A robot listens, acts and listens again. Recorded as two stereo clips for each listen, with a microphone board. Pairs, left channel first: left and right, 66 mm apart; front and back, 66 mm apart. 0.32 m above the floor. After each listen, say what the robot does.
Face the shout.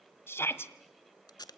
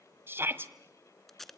Turn 135° left.
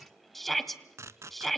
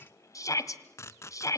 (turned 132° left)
Facing the shout, 1 to 2 m away.